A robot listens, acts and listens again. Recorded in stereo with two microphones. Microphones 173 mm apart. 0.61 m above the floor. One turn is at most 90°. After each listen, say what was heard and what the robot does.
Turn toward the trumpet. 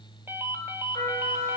The trumpet: about 20° left or 160° left. Turn 20° left.
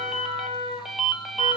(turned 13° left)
So it is at 150° left. Turn 90° left.
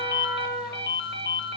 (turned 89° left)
The trumpet is now 60° left. Turn 60° left.
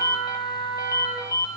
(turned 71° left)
The trumpet is now 15° right. Turn 15° right.
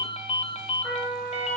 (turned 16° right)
Found it: a trumpet, straight ahead, 2 to 4 m away.